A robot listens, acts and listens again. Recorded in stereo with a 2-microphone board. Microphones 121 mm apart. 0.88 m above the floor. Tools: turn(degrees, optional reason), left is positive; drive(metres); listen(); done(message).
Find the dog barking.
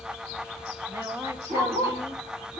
turn(degrees=-65, reason="The dog barking: about 65° right or 115° right.")
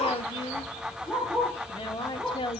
done("Found it: a dog barking, straight ahead.")